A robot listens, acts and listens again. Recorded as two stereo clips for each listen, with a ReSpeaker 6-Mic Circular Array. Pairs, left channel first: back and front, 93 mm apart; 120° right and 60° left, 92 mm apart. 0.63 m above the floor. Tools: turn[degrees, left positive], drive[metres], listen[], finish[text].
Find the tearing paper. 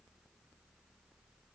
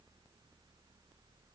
Action: listen[]
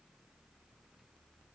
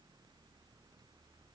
Action: listen[]
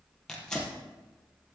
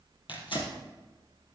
Thought: The tearing paper: 100° right.
Action: turn[-100]
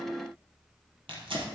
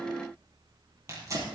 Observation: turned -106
Action: finish[Found it: tearing paper, straight ahead.]